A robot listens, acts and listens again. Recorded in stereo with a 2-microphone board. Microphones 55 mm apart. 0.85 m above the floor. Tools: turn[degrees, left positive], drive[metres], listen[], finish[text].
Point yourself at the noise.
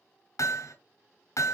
Thought: The hammering: about 70° left or 110° left.
Action: turn[70]
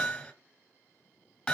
Thought: So it is at 10° left.
Action: turn[10]
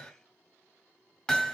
Action: finish[Found it: hammering, straight ahead.]